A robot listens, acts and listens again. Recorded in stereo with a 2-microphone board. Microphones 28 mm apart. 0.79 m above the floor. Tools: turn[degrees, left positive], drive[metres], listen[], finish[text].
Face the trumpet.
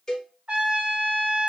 Thought: The trumpet: about 50° right or 130° right.
Action: turn[-50]
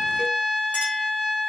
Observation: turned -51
Action: finish[Found it: a trumpet, straight ahead, 1 to 2 m away.]